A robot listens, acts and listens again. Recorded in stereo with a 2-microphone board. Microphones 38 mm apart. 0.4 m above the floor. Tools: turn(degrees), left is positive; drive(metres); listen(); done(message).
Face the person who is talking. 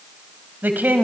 turn(degrees=-55)
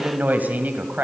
turn(degrees=-55)
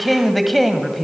done("Found it: a woman speaking, straight ahead, 2 to 4 m away.")